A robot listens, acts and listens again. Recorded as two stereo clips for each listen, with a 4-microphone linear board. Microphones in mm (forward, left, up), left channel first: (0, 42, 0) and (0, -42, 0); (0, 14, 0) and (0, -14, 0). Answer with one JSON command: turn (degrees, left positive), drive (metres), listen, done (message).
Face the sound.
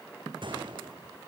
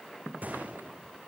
{"turn": -65}
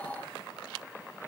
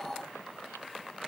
{"listen": true}
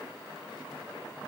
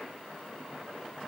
{"done": "I heard a gunshot, but can't make it out now. It was about straight ahead or 50° right."}